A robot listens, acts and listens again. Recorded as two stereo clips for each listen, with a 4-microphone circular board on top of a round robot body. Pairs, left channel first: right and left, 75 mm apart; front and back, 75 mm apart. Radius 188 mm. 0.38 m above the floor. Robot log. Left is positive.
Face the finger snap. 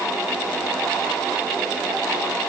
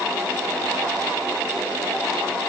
cmd idle
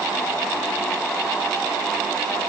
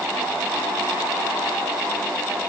cmd idle
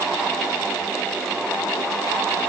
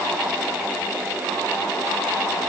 end: I can't make out a finger snap to turn to.